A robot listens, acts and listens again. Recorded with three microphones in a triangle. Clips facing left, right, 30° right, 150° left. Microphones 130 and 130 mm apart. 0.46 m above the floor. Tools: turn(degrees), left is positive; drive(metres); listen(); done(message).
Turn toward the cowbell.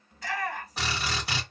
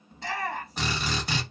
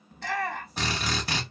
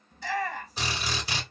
listen()
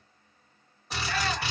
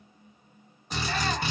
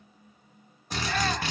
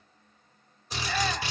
listen()
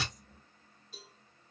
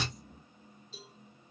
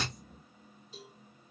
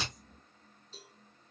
turn(degrees=50)
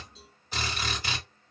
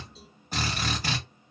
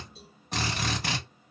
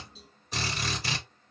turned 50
listen()
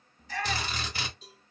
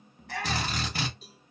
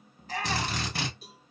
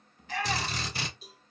done("Found it: a cowbell, straight ahead, 2 to 4 m away.")